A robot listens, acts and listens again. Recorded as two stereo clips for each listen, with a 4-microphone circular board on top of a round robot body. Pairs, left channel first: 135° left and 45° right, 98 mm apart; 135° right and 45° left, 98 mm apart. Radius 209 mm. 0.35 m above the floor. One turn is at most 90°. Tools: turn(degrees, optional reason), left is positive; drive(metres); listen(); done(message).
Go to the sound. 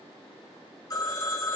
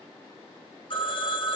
turn(degrees=-90, reason="The phone ringing: 170° right.")
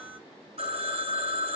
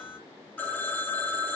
turn(degrees=-60, reason="The phone ringing is now 60° right.")
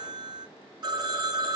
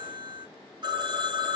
drive(metres=1.0)
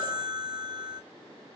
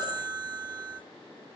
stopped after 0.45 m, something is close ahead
done("Something is in my way. I am facing the phone ringing but have not reached it.")